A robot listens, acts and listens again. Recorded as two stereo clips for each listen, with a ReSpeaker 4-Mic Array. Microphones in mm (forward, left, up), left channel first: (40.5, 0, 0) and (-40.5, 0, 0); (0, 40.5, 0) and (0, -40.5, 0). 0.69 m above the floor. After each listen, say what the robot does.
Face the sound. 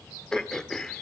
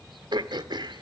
Turn 80° right.
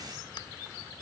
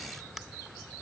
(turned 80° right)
Keep listening.
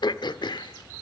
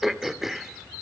Found it: throat clearing, straight ahead.